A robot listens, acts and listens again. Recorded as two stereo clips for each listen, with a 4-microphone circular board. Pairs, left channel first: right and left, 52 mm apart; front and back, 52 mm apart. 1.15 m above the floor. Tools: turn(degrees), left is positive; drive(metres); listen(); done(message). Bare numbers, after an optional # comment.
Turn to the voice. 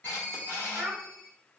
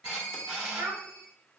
# The child speaking: 170° left.
turn(170)
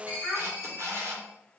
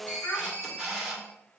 # The child speaking is now 15° left.
turn(15)
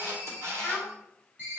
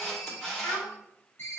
done("Facing the child speaking, 1 to 2 m away.")